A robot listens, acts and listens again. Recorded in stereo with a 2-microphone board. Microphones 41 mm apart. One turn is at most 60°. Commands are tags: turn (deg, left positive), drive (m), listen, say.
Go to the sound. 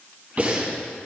<turn deg="-30"/>
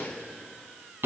<turn deg="-60"/>
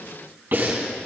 <turn deg="-55"/>
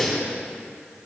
<drive m="1.0"/>
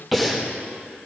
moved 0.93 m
<drive m="1.0"/>
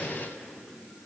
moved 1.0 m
<listen/>
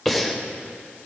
<drive m="1.0"/>
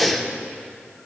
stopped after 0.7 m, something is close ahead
<say>I am next to the breathing.</say>